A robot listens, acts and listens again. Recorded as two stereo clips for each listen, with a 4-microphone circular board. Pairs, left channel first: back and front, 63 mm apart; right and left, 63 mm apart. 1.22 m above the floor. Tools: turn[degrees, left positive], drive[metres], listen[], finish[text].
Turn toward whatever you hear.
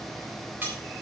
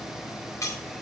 Thought: The cutlery clinking: 60° right.
Action: turn[-60]
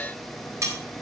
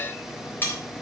Thought: The cutlery clinking is now 35° right.
Action: turn[-35]
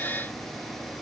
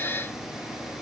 Action: listen[]
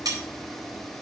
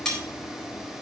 Thought: The cutlery clinking is now 10° right.
Action: turn[-10]
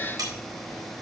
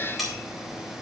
Action: finish[Found it: cutlery clinking, straight ahead, 2 to 4 m away.]